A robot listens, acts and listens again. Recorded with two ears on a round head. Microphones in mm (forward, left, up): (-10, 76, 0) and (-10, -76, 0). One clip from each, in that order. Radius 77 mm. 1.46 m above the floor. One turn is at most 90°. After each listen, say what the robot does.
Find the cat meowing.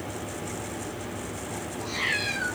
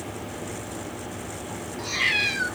Turn 75° right.
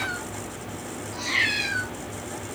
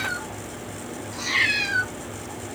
Facing the cat meowing, 2 to 4 m away.